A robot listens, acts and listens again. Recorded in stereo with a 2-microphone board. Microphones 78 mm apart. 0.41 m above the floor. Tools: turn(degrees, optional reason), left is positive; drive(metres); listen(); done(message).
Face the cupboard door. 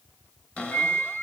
turn(degrees=30)
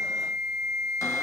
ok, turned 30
listen()
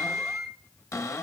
turn(degrees=135, reason="So it is at 135° left.")
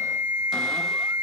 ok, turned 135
listen()
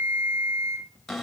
done("Facing the cupboard door, 1 to 2 m away.")